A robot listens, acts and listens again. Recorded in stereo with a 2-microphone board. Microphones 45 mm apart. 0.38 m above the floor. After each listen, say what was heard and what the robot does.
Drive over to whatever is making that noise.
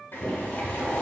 The boiling: about 45° left or 135° left. Turn 45° left.
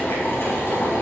So it is at 80° left. Turn 80° left.
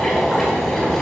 The boiling is now 10° left. Turn 10° left.
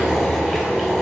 Drive 1.0 m forward.
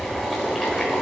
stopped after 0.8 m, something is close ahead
I am next to the boiling.